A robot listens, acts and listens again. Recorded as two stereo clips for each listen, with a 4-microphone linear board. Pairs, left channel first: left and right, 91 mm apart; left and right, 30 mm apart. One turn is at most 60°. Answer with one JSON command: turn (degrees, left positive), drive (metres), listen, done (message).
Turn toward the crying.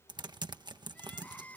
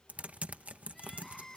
{"turn": 15}
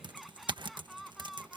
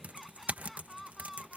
{"done": "Facing the crying."}